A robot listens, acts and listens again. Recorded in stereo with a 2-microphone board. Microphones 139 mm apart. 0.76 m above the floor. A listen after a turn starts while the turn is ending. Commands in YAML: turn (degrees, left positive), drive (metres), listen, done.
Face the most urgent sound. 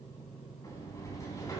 listen: true
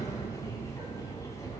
listen: true
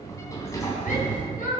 turn: 90
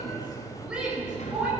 turn: -10
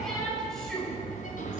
done: "Found it: a shout, straight ahead."